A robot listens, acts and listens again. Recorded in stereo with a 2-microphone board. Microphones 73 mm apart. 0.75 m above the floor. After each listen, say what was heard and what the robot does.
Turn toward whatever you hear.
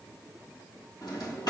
Turn 90° left.
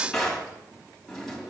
Facing the drawer.